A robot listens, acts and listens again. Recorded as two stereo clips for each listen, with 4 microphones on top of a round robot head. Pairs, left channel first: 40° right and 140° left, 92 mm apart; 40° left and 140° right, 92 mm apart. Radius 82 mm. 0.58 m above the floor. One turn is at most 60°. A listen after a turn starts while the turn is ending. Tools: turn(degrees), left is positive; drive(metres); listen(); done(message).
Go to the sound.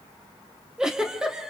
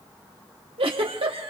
turn(degrees=-60)
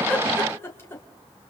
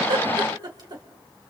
turn(degrees=-60)
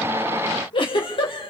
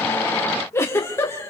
turn(degrees=-20)
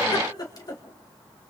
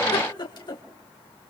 drive(metres=1.0)
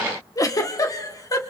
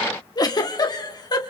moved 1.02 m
drive(metres=1.0)
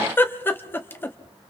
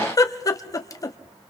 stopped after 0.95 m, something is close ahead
turn(degrees=15)
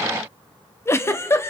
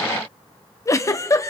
done("Arrived at the giggle, straight ahead.")